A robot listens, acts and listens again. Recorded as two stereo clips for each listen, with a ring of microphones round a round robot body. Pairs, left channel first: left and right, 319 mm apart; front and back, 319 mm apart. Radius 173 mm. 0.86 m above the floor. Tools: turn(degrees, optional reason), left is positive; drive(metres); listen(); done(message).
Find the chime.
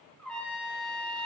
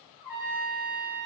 listen()
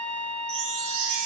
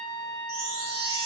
turn(degrees=-105, reason="The chime: 105° right.")
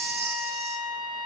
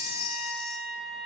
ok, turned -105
turn(degrees=-20, reason="The chime is now 20° right.")
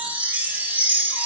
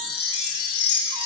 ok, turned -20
done("Found it: a chime, straight ahead, 1 to 2 m away.")